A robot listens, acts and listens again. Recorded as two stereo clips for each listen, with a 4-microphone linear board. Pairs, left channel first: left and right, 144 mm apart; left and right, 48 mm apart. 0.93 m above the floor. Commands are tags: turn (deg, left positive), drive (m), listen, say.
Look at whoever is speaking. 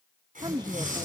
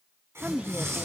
<turn deg="-30"/>
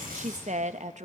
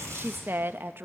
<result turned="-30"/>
<turn deg="-115"/>
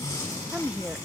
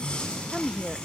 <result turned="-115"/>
<turn deg="-10"/>
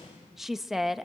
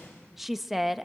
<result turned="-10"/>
<say>Facing the woman speaking, under 1 m away.</say>